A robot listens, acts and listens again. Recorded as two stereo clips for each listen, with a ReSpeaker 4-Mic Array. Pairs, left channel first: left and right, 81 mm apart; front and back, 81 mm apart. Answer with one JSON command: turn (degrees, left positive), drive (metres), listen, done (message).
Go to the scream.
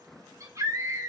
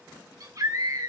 {"turn": -140}
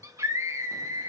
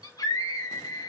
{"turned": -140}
{"turn": -40}
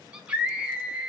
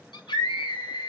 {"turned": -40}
{"turn": -15}
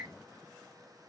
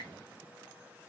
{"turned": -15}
{"drive": 1.0}
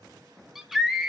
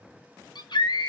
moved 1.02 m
{"drive": 1.0}
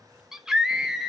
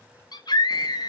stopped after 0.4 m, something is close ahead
{"turn": -10}
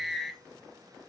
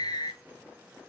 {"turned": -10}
{"done": "Arrived at the scream, straight ahead."}